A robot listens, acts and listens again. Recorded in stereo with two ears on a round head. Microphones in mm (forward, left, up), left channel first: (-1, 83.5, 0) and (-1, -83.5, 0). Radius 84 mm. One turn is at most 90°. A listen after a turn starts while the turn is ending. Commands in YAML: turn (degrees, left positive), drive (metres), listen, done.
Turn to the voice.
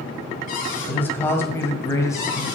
turn: 20
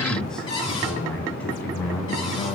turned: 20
turn: 30
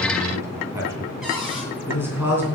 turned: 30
turn: -10
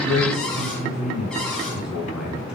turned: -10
done: "Found it: a man speaking, straight ahead."